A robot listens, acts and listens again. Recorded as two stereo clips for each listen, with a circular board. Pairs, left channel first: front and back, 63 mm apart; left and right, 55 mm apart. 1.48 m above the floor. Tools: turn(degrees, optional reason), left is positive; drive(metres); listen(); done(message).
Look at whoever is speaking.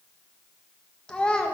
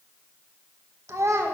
turn(degrees=-75, reason="The child speaking: 75° right.")
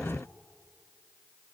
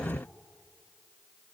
listen()
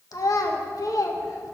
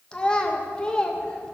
turn(degrees=15, reason="The child speaking is now 15° left.")
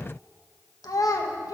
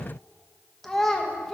done("Found it: a child speaking, straight ahead.")